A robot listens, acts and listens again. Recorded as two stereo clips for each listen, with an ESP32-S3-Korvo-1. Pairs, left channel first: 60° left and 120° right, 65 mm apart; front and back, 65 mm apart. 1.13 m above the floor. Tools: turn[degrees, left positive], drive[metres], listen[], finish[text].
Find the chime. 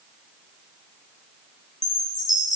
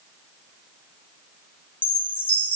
Thought: The chime: 65° left.
Action: turn[65]
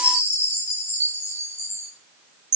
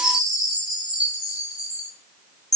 Thought: The chime is now 15° left.
Action: turn[15]
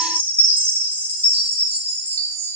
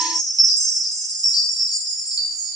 Action: finish[Found it: a chime, straight ahead, 1 to 2 m away.]